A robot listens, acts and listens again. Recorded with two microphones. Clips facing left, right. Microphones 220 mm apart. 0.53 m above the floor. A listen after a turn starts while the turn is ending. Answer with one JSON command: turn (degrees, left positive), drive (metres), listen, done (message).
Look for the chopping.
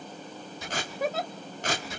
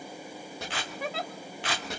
{"turn": -90}
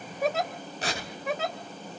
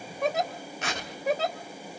{"turn": 10}
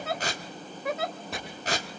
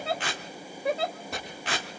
{"done": "Found it: chopping, straight ahead."}